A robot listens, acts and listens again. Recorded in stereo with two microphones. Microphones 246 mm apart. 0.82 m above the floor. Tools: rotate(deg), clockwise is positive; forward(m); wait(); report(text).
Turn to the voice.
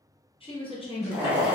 rotate(-20)
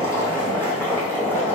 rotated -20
wait()
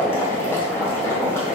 wait()
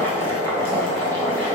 report("I heard a woman speaking, but can't make it out now. It was about straight ahead or 140° left.")